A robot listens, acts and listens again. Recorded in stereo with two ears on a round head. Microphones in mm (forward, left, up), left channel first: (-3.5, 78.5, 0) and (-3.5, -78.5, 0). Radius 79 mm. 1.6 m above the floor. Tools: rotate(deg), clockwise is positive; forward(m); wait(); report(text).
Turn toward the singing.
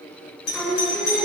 rotate(-30)
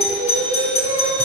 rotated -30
rotate(20)
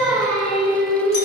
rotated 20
report("Found it: singing, straight ahead, over 4 m away.")